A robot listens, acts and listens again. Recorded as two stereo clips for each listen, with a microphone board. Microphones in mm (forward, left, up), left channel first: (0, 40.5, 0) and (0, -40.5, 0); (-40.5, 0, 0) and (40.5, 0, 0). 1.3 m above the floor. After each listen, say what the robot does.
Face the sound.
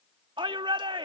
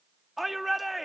Turn 90° right.
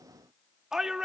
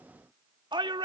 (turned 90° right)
Facing the shout.